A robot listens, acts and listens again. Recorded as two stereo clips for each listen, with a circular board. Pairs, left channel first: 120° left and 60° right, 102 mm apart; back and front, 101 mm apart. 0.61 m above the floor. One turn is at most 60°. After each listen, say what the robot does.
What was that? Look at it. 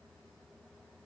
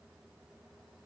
Keep listening.
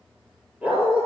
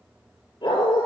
Turn 60° right.
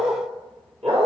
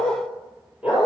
Turn 60° right.
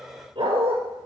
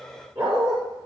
Turn 25° right.
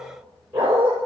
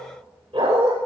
Turn 10° left.
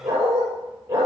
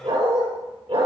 Found it: a dog barking, straight ahead, over 4 m away.